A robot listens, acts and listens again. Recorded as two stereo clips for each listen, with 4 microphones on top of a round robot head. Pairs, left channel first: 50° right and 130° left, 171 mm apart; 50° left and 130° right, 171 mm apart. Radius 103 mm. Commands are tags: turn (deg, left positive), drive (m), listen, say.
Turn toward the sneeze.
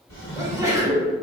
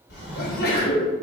<turn deg="60"/>
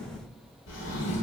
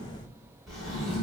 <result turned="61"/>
<say>Facing where the sneeze came from. I can't hear it now.</say>